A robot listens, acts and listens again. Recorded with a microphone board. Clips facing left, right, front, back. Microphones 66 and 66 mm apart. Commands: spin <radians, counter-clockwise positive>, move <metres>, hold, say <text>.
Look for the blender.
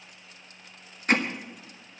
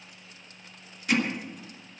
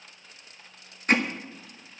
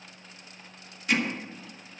hold
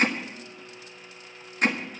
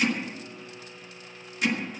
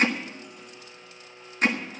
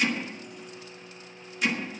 spin -0.26
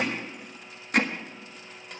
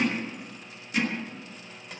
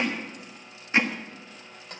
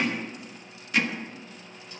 say Facing the blender.